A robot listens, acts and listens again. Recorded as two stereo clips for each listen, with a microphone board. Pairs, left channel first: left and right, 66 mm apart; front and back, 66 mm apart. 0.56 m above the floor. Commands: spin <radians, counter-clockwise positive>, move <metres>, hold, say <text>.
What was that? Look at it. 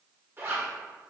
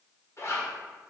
spin -0.70
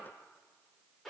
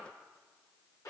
say Facing the zipper, 1 to 2 m away.